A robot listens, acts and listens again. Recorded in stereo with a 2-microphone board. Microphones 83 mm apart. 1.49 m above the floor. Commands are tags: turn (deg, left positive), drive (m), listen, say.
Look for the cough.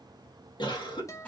<turn deg="70"/>
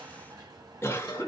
<turn deg="30"/>
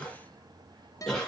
<say>Facing the cough.</say>